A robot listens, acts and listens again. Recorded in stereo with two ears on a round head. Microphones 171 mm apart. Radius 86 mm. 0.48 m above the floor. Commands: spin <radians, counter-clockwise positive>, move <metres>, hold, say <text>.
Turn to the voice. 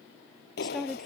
spin 0.52
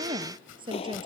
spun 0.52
spin -0.44
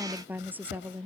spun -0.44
spin -0.17
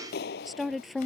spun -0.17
say Facing the woman speaking.